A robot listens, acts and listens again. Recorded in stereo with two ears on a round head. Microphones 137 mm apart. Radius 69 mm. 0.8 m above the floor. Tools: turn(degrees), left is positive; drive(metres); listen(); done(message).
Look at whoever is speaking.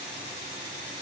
listen()
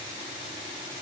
listen()
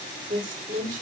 turn(degrees=-55)
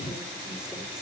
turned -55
listen()
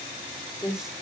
done("Found it: a woman speaking, straight ahead, 2 to 4 m away.")